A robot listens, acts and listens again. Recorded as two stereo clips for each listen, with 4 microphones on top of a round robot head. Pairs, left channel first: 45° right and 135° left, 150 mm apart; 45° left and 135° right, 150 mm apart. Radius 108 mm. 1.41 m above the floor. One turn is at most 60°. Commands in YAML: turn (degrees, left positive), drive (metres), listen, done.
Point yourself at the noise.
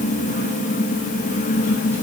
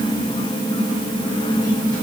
listen: true
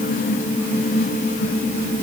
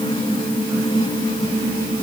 listen: true
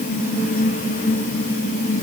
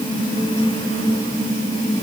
done: "I can't make out anything."